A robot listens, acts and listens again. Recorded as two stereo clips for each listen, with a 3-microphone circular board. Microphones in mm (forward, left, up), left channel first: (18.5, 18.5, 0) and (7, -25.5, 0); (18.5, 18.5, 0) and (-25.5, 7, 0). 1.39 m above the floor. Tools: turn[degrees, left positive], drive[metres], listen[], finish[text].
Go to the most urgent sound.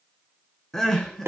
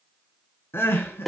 Action: drive[1.0]
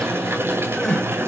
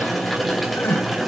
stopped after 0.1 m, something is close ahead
Action: finish[Blocked. The crying is further on, straight ahead.]